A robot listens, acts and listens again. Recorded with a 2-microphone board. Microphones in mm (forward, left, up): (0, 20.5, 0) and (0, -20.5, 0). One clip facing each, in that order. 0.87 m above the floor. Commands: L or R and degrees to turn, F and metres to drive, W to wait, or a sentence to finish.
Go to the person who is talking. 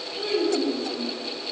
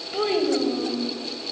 R70
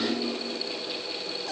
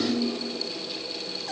F1.0
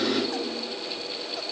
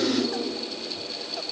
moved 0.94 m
F1.0
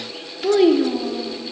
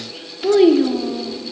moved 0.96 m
F1.0
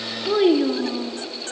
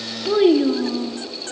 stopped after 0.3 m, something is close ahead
Arrived at the child speaking, straight ahead.